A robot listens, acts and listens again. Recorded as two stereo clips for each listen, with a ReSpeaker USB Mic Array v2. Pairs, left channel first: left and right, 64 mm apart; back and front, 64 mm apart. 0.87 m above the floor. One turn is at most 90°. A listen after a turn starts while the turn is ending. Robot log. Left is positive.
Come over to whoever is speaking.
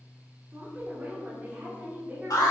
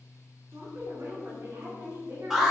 note: The woman speaking: 30° right.
cmd yaw -30
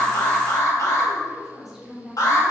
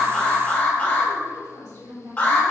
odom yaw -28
cmd fwd 1.0
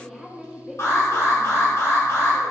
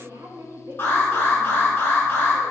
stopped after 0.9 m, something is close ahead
end: I am next to the woman speaking.